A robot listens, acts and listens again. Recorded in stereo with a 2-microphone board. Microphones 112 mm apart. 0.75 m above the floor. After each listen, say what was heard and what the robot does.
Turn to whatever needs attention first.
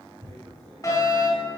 The fire alarm: about 30° left or 150° left. Turn 30° left.
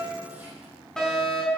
Facing the fire alarm, over 4 m away.